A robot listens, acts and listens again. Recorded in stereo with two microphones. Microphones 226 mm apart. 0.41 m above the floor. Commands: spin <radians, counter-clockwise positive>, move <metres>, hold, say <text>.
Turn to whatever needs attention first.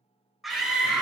spin 0.52
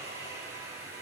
hold
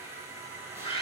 spin 2.62
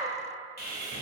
spin 0.17
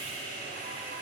hold
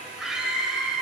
say Found it: a scream, straight ahead, 1 to 2 m away.